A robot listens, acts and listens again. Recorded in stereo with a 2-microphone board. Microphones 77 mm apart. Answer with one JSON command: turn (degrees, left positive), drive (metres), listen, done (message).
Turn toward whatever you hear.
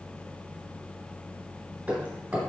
{"turn": -30}
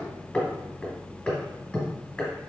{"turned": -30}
{"turn": 20}
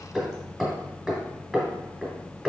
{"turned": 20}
{"done": "Facing the hammering."}